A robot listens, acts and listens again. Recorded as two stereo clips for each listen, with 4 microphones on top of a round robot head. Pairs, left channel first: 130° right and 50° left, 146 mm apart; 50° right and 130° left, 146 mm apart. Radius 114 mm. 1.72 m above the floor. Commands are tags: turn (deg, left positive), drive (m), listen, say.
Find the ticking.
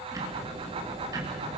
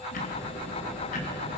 <turn deg="-20"/>
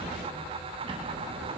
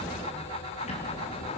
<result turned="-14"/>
<say>Facing the ticking.</say>